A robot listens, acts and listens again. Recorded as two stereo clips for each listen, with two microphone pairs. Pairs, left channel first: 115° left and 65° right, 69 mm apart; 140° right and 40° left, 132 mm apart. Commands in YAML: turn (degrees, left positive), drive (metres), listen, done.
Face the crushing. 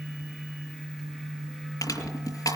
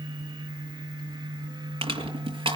turn: 90
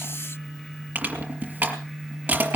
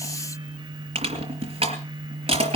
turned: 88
done: "Facing the crushing, over 4 m away."